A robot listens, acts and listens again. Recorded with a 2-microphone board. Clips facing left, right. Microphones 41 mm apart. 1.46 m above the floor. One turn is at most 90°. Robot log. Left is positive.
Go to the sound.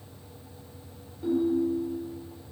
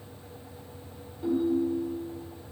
cmd yaw -30
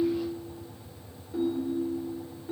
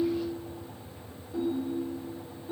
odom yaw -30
note: So it is at 25° left.
cmd yaw +25
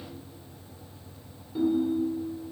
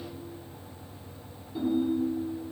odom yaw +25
note: The ringtone is now 10° left.
cmd yaw +10
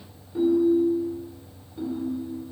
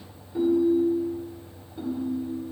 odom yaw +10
cmd fwd 1.0
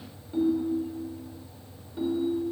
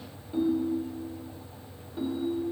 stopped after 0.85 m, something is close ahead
end: Arrived at the ringtone, straight ahead.